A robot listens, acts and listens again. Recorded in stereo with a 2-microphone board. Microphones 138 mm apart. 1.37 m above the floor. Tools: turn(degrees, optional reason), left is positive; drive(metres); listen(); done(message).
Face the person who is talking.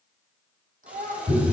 turn(degrees=-90)
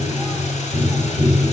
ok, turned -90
listen()
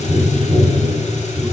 listen()
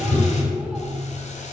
done("I heard a child speaking from this way, but can't make it out now.")